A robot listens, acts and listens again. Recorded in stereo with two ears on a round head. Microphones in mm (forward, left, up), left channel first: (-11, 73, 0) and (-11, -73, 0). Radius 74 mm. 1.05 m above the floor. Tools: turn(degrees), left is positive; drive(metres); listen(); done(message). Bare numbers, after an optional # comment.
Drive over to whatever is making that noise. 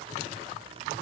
listen()
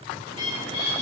# The bird: about 40° left or 140° left.
turn(40)
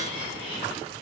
# So it is at 95° left.
turn(95)
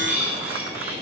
# The bird is now 10° right.
turn(-10)
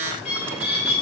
drive(1.0)
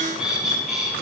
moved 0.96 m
drive(1.0)
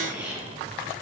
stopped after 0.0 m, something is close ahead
# The bird is now 10° right.
turn(-10)
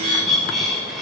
done("I am next to the bird.")